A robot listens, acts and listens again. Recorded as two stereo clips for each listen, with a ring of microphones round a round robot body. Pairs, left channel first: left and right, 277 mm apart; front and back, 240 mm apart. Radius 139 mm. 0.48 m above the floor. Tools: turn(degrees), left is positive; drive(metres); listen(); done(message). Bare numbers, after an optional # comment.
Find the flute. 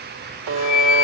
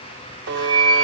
# The flute: 70° left.
turn(70)
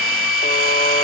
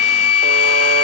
done("Facing the flute.")